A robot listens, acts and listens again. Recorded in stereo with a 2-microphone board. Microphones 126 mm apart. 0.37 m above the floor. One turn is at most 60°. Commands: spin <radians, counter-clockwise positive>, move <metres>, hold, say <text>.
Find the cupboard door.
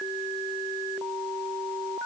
hold
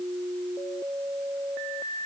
hold
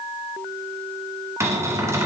spin -0.35
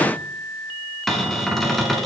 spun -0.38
say Facing the cupboard door, 1 to 2 m away.